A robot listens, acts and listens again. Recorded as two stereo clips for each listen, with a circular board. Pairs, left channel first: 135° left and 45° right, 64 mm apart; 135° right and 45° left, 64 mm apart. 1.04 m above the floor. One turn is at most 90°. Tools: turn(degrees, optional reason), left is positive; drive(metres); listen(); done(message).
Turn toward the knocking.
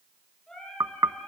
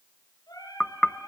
turn(degrees=-55, reason="The knocking: 55° right.")
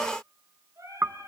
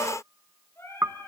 done("Facing the knocking.")